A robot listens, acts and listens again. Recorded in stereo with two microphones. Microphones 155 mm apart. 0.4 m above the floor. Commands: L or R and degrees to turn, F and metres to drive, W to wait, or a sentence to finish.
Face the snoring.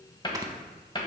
R25
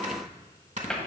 R130
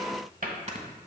R50
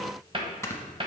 L20
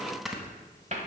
Found it: snoring, straight ahead, under 1 m away.